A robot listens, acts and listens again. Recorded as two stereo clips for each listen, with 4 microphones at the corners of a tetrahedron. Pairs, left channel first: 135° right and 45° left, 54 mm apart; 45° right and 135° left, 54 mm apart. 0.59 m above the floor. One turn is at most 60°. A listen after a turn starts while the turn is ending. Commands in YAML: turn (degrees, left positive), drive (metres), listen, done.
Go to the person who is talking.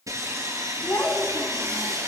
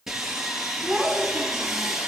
turn: -60
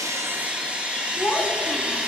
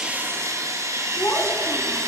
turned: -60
turn: -60
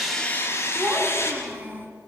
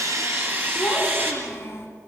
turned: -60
drive: 1.0
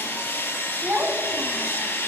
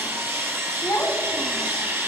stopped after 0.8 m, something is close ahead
turn: -20
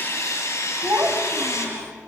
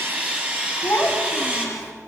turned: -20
done: "Blocked. The child speaking is further on, straight ahead."